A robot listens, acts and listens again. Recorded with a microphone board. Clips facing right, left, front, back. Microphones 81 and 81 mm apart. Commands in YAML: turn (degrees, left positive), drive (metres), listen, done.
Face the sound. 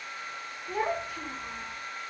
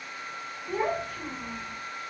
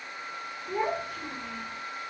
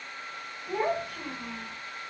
turn: 180
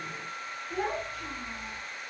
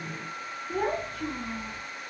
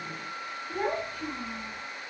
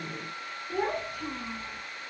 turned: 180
turn: 100
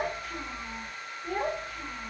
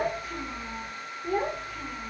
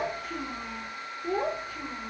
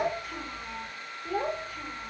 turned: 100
done: "Found it: a child speaking, straight ahead, 2 to 4 m away."